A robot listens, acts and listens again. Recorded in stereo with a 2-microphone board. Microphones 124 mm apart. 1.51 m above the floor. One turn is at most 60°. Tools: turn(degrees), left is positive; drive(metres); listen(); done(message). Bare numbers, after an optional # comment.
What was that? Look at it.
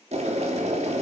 # The boiling: about 60° right or 120° right.
turn(-60)
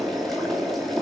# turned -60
done("Found it: boiling, straight ahead.")